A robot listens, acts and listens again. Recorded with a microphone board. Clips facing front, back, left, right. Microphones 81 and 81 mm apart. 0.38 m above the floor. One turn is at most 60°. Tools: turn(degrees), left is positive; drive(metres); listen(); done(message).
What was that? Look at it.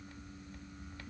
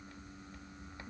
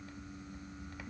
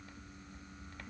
listen()
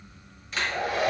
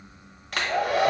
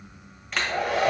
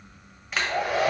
turn(degrees=-60)
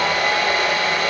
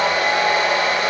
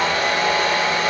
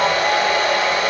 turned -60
turn(degrees=-60)
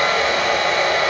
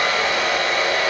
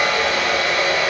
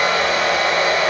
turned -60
turn(degrees=-40)
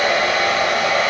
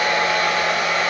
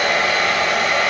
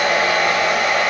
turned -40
done("Found it: a hair dryer, straight ahead.")